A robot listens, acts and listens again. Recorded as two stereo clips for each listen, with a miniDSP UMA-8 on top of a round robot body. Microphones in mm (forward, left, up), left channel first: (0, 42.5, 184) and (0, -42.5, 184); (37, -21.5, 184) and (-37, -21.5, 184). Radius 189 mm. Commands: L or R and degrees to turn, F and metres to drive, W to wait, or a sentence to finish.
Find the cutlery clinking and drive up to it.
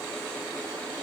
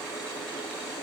W
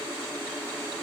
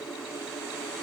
W
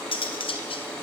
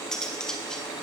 L80
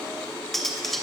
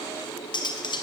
F1.0
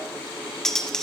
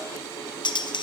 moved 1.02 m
F1.0
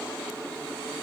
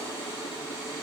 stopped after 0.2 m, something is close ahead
W
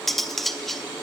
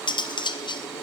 Arrived at the cutlery clinking, straight ahead.